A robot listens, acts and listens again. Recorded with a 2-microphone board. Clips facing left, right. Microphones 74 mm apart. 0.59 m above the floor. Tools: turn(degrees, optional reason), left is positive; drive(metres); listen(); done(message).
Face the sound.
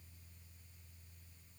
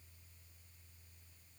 listen()
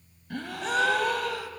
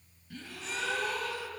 turn(degrees=65, reason="The gasp: about 65° left or 115° left.")
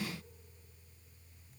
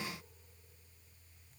listen()
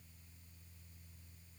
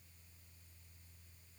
done("I heard a gasp, but can't make it out now. It was about straight ahead or 50° left.")